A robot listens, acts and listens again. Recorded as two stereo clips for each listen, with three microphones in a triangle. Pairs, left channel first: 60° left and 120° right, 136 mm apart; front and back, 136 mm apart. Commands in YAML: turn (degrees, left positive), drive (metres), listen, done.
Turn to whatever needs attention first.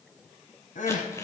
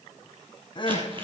turn: 50
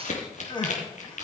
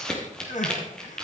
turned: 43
done: "Found it: crying, straight ahead, 2 to 4 m away."